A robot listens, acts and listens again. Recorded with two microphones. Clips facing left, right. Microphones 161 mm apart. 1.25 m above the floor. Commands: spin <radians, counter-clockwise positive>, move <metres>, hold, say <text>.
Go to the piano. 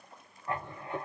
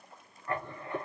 hold
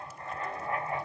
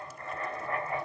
hold
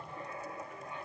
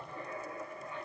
say I can't make out a piano, only writing.